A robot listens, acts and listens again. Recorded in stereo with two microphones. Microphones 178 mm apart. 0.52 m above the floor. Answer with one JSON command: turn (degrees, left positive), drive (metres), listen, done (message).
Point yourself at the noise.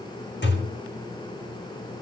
{"turn": 75}
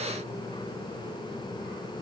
{"listen": true}
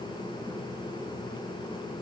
{"done": "I heard a thud, but can't make it out now. It was about straight ahead or 30° left."}